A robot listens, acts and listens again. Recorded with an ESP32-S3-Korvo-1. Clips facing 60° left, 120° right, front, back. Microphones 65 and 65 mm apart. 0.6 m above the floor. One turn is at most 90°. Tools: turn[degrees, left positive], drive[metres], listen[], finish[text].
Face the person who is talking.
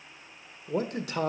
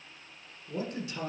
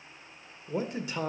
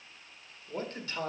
Thought: The man speaking: 75° left.
Action: turn[75]
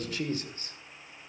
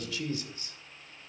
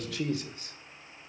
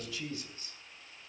Thought: The man speaking is now 10° left.
Action: turn[10]
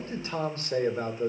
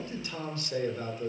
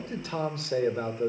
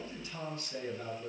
Action: finish[Found it: a man speaking, straight ahead, 1 to 2 m away.]